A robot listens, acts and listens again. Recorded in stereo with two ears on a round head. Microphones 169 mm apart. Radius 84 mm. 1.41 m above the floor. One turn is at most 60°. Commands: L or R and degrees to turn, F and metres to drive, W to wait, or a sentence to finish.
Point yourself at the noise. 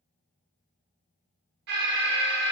R60
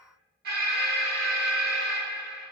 R55
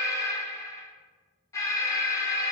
L15
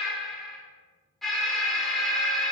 Facing the alarm, under 1 m away.